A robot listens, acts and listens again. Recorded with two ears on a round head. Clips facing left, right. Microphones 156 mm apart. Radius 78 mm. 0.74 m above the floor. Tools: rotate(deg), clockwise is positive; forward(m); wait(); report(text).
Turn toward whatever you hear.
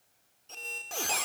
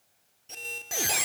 rotate(30)
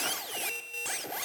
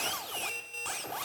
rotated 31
rotate(-15)
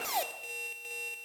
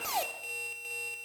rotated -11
report("Found it: a squeak, straight ahead, 1 to 2 m away.")